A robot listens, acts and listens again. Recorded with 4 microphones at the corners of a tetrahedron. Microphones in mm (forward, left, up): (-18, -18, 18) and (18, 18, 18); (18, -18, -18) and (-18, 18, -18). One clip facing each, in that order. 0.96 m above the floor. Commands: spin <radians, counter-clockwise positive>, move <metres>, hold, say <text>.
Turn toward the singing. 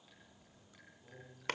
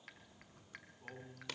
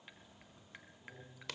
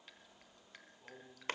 spin 1.31
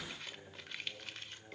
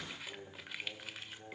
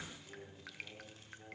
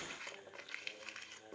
spin 0.52
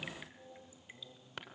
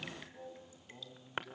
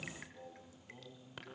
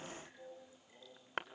spin 0.17
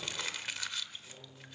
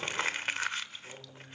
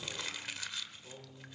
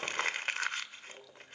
spin 0.17
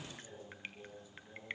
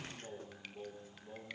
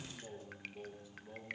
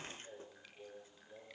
say Found it: singing, straight ahead.